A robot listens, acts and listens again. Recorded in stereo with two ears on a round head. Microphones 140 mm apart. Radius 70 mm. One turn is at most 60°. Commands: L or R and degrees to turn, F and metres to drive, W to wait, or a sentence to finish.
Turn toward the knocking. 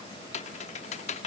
W
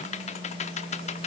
W
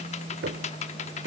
R60
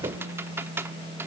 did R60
R30
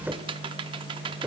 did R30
R10
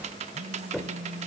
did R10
Found it: knocking, straight ahead.